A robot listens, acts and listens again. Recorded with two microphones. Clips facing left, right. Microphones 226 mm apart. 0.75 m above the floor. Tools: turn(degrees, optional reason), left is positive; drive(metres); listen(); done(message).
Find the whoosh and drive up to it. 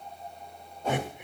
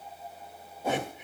turn(degrees=-30)
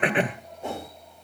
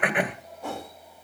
turn(degrees=20, reason="So it is at 20° left.")
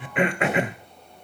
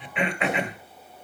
listen()
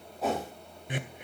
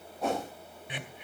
drive(metres=1.0)
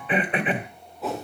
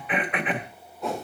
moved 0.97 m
drive(metres=1.0)
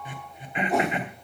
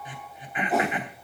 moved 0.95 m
drive(metres=1.0)
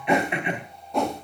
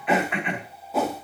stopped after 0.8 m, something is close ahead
done("Arrived at the whoosh, straight ahead.")